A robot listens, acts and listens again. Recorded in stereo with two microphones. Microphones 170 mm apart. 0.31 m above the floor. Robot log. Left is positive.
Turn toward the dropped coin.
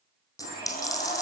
note: The dropped coin: about 20° left or 160° left.
cmd yaw +20
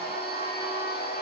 cmd idle
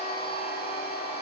end: I heard a dropped coin, but can't make it out now. It was about straight ahead or 140° left.